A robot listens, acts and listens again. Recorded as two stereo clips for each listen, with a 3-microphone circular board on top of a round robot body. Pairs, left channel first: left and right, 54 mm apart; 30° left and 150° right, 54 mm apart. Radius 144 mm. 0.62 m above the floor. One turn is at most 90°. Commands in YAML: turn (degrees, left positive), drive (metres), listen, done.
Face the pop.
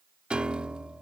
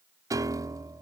listen: true
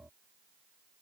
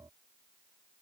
listen: true
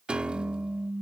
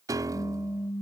done: "Found it: a pop, straight ahead."